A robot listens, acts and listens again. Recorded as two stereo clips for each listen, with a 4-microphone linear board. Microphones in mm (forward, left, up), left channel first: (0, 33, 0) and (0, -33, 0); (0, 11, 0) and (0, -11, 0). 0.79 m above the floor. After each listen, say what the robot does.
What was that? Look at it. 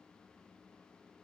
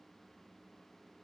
Keep listening.
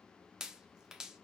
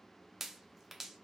Turn 30° right.
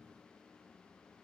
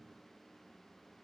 Keep listening.
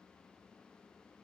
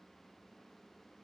I heard a pop, but can't make it out now. It was about 20° left or 140° right.